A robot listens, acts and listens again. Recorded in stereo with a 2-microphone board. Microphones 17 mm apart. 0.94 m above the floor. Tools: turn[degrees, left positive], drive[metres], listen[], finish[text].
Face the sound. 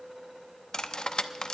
Thought: The cutlery clinking: about 50° left or 130° left.
Action: turn[50]
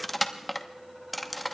Action: finish[Facing the cutlery clinking.]